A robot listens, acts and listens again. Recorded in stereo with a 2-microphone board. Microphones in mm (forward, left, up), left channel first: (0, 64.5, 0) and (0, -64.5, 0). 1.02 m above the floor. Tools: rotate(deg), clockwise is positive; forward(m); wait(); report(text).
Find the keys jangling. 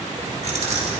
rotate(60)
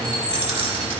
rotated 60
rotate(45)
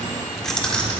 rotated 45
rotate(-10)
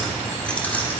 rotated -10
rotate(-15)
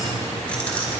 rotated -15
rotate(-10)
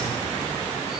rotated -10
wait()
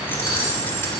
wait()
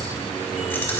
rotate(-15)
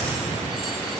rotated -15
wait()
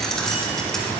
report("Found it: keys jangling, straight ahead.")